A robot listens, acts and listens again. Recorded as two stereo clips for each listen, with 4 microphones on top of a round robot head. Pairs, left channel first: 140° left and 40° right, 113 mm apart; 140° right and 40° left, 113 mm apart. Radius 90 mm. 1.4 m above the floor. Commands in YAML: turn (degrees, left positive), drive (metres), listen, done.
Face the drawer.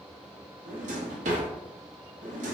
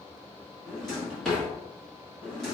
turn: -55
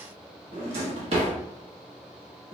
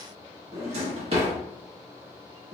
done: "Facing the drawer, under 1 m away."